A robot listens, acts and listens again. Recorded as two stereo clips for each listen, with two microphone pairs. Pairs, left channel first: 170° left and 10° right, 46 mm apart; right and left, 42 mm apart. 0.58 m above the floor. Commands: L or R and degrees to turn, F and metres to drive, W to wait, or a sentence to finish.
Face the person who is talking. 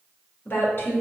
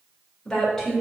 R175
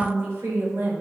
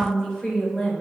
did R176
R30
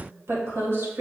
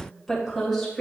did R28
R10
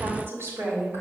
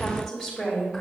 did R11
R10
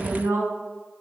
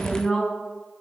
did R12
Facing the woman speaking.